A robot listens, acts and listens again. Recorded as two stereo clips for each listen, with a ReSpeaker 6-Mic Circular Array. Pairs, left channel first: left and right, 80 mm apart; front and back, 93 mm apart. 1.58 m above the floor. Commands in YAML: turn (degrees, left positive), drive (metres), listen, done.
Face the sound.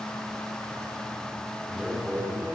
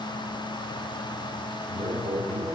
turn: -170
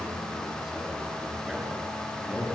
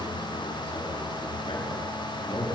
turn: -10
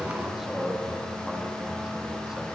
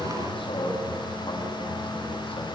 turn: -10
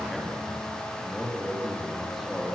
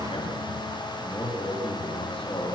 done: "Found it: a man speaking, straight ahead, 2 to 4 m away."